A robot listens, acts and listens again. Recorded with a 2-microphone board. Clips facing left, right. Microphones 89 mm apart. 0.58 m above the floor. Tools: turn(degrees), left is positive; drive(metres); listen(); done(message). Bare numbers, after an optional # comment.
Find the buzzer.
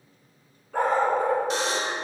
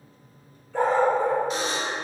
turn(90)
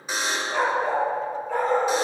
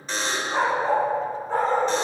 # So it is at 10° left.
turn(10)
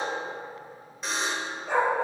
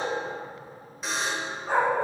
done("Found it: a buzzer, straight ahead.")